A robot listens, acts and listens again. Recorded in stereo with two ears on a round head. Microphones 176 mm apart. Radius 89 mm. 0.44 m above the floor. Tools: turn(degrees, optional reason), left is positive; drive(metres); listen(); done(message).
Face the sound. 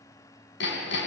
turn(degrees=65, reason="The hammering: about 65° left or 115° left.")
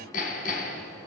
turn(degrees=45, reason="So it is at 45° left.")
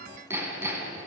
turn(degrees=-15, reason="The hammering is now 15° right.")
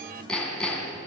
done("Facing the hammering, over 4 m away.")